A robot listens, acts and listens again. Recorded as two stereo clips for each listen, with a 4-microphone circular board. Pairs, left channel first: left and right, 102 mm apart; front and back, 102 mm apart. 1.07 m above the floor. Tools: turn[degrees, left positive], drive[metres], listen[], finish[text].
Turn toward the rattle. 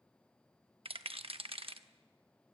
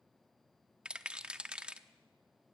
Thought: The rattle: 100° right.
Action: turn[-100]
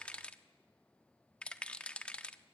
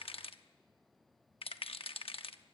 Thought: The rattle is now 10° left.
Action: turn[10]
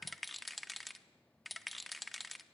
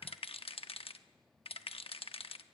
Action: finish[Found it: a rattle, straight ahead.]